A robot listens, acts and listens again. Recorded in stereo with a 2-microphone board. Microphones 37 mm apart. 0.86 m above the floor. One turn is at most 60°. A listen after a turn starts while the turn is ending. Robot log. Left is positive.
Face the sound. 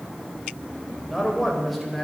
cmd yaw +30
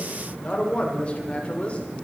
note: So it is at 145° left.
cmd yaw +60
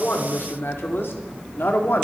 note: The man speaking is now 70° left.
cmd yaw +60
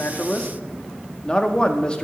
note: The man speaking is now 20° left.
cmd yaw +20
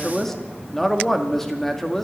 end: Found it: a man speaking, straight ahead.